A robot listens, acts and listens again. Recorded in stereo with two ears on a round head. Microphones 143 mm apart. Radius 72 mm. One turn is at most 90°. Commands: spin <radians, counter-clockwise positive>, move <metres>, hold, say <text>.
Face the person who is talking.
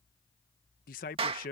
spin 0.96
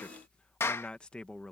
say Found it: a man speaking, straight ahead.